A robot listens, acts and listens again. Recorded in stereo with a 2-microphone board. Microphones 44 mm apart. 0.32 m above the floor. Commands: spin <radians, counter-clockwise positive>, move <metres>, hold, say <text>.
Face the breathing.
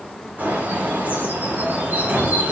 spin -0.96
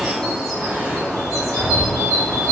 spin -0.79
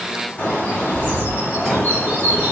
say Found it: breathing, straight ahead, 1 to 2 m away.